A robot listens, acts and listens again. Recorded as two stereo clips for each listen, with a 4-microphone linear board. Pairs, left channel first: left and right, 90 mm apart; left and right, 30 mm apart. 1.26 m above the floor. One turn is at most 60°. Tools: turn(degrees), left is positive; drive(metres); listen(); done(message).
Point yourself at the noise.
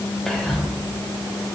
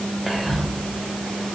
turn(degrees=30)
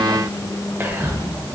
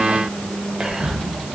turn(degrees=-25)
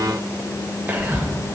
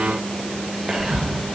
turn(degrees=-20)
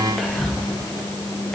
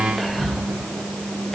done("Found it: whispering, straight ahead, under 1 m away.")